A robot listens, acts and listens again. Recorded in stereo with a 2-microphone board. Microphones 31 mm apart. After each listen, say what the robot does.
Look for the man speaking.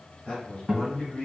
Turn 45° left.
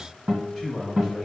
Found it: a man speaking, straight ahead.